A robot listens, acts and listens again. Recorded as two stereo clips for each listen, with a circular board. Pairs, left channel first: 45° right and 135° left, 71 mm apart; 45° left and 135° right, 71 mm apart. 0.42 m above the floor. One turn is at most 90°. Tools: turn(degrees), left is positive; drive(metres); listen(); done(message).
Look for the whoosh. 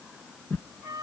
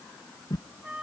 turn(degrees=20)
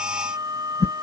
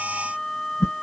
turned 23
done("Facing the whoosh.")